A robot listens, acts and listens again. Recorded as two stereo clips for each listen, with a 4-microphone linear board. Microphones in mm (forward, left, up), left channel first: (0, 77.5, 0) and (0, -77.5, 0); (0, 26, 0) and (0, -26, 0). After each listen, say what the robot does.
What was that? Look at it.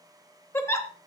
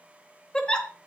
Turn 15° left.
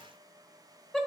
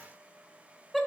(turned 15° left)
Facing the giggle, 1 to 2 m away.